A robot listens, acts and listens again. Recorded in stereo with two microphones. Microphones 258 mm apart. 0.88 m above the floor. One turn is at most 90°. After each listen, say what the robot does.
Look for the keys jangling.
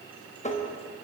Keep listening.
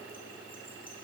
Keep listening.
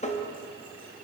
I can't make out keys jangling, only tapping.